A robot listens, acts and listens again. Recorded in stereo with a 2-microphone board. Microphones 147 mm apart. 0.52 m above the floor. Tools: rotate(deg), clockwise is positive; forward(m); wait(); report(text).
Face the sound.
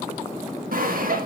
rotate(70)
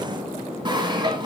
rotate(30)
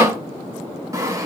rotate(20)
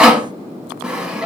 report("Found it: sawing, straight ahead.")